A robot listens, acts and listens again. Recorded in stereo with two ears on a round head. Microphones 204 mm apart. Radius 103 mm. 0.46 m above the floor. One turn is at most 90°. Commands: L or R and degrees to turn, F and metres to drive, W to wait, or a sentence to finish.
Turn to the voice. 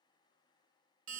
W
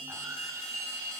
W
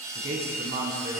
R50
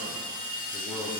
W
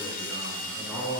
Facing the man speaking, over 4 m away.